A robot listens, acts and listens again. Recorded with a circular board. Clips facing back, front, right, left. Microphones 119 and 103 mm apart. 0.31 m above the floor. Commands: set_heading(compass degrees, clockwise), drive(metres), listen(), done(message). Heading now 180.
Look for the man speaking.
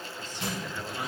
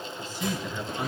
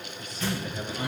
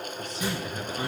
set_heading(100)
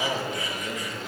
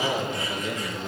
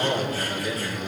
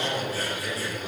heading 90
set_heading(100)
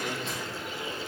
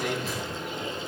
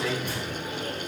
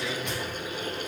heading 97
done("Found it: a man speaking, straight ahead, 2 to 4 m away.")